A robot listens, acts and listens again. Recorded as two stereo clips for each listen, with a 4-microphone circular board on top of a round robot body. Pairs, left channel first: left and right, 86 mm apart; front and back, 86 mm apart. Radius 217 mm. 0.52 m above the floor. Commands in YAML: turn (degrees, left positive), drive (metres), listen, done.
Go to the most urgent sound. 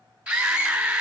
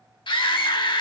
turn: -15
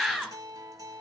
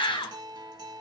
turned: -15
drive: 1.0
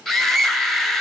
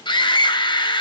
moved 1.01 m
drive: 1.0
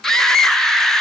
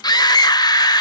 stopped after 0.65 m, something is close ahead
done: "Arrived at the scream, straight ahead."